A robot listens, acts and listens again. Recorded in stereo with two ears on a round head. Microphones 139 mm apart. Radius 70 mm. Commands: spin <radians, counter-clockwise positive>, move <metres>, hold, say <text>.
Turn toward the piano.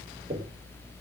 hold
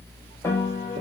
spin 0.35
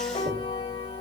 spin 2.44
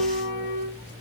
spin 1.13
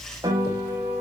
spin -0.35
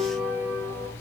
say Facing the piano, over 4 m away.